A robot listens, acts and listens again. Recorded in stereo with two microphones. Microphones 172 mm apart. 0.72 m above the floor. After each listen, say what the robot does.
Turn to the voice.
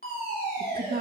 Turn 60° right.
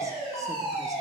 Keep listening.
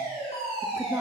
Keep listening.
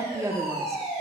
Turn 20° right.
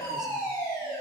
Keep listening.
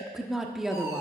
Facing the woman speaking.